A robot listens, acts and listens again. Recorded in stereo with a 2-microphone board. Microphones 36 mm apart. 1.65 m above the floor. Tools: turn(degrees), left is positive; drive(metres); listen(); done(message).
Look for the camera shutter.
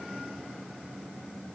listen()
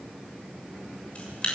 turn(degrees=30)
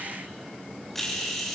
done("Found it: a camera shutter, straight ahead.")